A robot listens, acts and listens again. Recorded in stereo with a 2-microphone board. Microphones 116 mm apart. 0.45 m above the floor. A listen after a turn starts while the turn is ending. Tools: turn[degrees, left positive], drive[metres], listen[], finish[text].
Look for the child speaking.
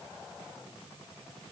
Action: listen[]
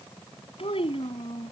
Thought: The child speaking: about 55° left or 125° left.
Action: turn[55]
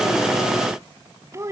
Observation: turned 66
Thought: So it is at 30° right.
Action: turn[-30]
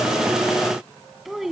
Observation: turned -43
Action: finish[Found it: a child speaking, straight ahead.]